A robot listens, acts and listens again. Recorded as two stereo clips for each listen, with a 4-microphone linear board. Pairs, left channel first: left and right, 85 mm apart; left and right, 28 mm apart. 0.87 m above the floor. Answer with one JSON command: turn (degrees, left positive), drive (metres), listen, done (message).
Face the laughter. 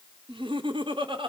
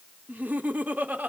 {"turn": -90}
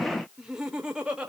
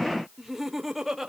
{"turn": -10}
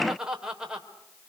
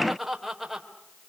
{"turn": -10}
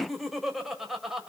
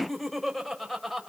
{"done": "Facing the laughter."}